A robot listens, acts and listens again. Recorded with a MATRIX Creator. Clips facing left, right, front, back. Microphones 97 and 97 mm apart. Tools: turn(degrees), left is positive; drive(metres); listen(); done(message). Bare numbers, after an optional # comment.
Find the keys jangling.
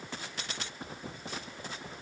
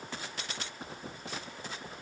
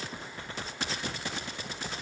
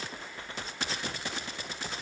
listen()
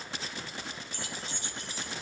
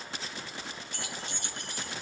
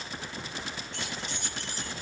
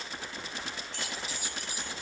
# The keys jangling: 100° right.
turn(-100)
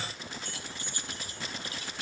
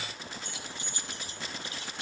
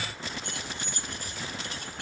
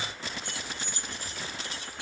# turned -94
# The keys jangling is now 30° right.
turn(-30)
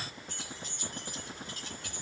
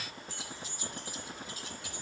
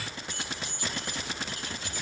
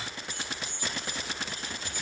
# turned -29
done("Found it: keys jangling, straight ahead, 2 to 4 m away.")